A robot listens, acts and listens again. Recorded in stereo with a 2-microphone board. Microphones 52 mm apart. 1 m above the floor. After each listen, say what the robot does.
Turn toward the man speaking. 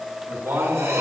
Turn 70° right.
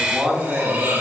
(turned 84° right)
Turn 10° right.
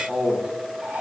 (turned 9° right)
Turn 10° right.
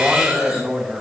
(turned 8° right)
Turn 25° right.
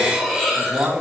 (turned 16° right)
Turn 35° right.
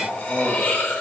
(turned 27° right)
Turn 10° right.
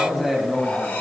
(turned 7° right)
Found it: a man speaking, straight ahead, 1 to 2 m away.